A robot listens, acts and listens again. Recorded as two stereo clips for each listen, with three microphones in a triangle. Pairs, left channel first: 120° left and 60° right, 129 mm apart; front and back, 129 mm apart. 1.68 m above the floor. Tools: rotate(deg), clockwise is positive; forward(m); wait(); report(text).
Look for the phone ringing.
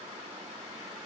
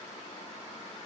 wait()
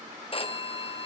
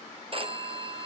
rotate(-150)
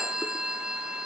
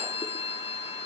rotate(-25)
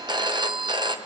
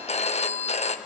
rotate(10)
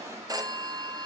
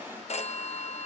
report("Found it: a phone ringing, straight ahead.")